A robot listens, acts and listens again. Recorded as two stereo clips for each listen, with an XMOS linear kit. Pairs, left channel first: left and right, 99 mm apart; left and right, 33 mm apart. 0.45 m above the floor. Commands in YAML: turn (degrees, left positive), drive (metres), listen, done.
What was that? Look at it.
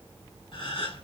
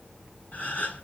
turn: 55
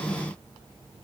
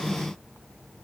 listen: true
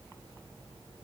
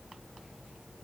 done: "I heard a gasp, but can't make it out now. It was about straight ahead or 70° left."